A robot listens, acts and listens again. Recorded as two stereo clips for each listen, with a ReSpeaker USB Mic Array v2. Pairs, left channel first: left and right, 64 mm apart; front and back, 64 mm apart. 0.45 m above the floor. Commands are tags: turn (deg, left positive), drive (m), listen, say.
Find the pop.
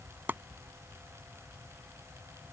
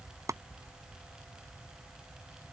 <listen/>
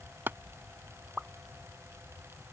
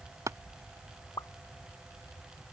<turn deg="-15"/>
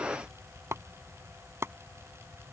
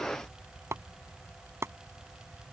<say>I heard a pop from this way, but can't make it out now.</say>